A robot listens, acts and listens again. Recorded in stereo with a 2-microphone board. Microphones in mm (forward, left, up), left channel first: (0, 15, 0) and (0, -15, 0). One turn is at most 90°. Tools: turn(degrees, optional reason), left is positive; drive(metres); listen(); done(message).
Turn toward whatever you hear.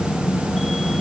listen()
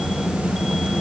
listen()
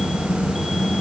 done("I can't make out anything to turn to.")